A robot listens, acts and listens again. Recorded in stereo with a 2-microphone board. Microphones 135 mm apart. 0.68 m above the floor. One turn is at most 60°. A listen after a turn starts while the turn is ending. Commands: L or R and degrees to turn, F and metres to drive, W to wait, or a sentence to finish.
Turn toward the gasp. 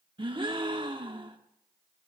R35
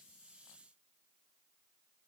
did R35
W
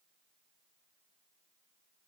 I heard a gasp, but can't make it out now. It was about straight ahead or 110° right.